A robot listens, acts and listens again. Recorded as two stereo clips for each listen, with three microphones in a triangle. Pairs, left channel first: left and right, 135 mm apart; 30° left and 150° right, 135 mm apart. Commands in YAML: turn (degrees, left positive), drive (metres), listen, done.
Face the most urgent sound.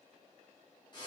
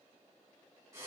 listen: true
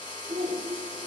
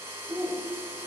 turn: -80
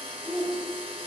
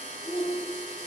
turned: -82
done: "Found it: a shout, straight ahead, 1 to 2 m away."